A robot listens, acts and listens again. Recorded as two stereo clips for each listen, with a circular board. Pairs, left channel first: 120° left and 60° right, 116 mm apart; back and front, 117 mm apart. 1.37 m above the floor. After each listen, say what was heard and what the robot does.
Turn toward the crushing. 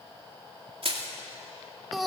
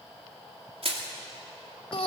The crushing: 30° right. Turn 30° right.
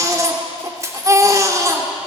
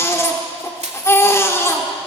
Found it: crushing, straight ahead.